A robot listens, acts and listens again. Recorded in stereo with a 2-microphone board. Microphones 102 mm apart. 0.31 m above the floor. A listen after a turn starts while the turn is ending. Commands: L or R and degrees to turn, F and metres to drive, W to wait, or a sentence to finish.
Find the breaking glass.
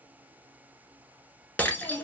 L15
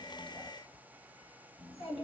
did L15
W
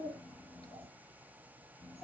I heard breaking glass, but can't make it out now. It was about straight ahead or 150° left.